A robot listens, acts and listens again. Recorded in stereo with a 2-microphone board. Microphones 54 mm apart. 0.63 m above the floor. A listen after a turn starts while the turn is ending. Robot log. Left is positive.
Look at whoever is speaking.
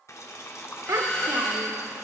note: The child speaking: about 70° right or 110° right.
cmd yaw -70
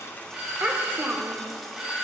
note: So it is at 35° right.
cmd yaw -35
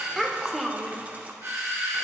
end: Facing the child speaking.